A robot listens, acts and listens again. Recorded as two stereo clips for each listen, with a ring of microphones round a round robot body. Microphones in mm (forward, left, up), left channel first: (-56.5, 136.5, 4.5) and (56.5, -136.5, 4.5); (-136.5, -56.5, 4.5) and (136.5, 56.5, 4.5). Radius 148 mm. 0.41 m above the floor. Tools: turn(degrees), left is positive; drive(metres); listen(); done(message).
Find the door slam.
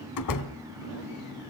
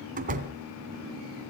turn(degrees=85)
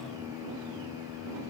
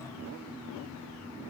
done("Facing where the door slam came from. I can't hear it now.")